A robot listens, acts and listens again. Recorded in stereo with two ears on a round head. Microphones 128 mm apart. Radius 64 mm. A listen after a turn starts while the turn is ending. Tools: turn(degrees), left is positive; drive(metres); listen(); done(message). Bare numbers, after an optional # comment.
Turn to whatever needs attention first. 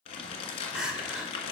turn(-30)
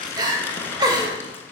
# So it is at 145° right.
turn(-145)
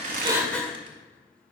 # The crying is now 10° left.
turn(10)
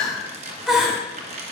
done("Facing the crying.")